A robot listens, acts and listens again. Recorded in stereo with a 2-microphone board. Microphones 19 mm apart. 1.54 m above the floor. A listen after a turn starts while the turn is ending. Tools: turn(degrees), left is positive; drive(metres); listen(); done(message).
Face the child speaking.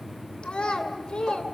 turn(degrees=70)
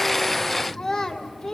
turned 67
turn(degrees=15)
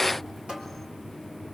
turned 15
listen()
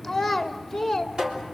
done("Found it: a child speaking, straight ahead.")